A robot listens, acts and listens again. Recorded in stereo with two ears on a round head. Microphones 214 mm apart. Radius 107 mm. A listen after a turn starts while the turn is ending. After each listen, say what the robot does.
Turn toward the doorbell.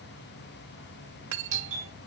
Turn 30° right.
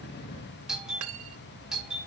Facing the doorbell, 2 to 4 m away.